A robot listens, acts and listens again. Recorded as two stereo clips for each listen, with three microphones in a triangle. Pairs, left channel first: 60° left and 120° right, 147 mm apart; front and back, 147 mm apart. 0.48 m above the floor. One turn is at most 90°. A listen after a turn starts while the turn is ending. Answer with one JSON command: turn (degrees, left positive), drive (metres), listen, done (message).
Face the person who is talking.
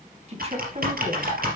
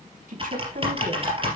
{"turn": -90}
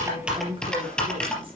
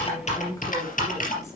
{"turn": -70}
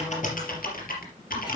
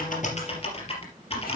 {"listen": true}
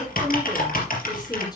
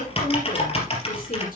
{"listen": true}
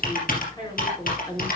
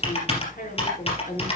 {"done": "Facing the woman speaking, over 4 m away."}